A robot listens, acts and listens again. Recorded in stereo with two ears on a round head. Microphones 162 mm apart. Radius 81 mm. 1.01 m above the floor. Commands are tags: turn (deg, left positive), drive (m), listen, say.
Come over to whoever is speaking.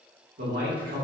<turn deg="-55"/>
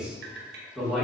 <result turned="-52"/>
<drive m="1.0"/>
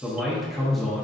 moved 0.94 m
<drive m="1.0"/>
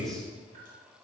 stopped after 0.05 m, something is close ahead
<say>I am next to the man speaking.</say>